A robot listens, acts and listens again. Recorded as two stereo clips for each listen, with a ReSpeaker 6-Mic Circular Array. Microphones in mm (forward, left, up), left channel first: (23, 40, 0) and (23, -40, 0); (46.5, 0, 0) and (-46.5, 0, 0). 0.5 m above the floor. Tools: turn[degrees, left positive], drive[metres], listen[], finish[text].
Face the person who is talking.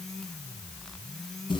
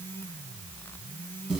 Action: listen[]
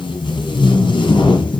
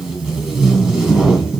Action: listen[]
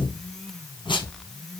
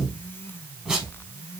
Action: finish[I can't make out anyone speaking, only tape being pulled.]